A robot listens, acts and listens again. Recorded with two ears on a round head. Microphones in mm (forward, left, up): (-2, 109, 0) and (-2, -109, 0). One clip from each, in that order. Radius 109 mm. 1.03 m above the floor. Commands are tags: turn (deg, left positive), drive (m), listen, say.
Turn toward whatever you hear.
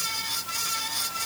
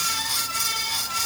<listen/>
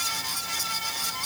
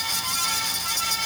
<listen/>
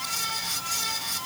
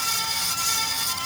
<say>I can't make out anything.</say>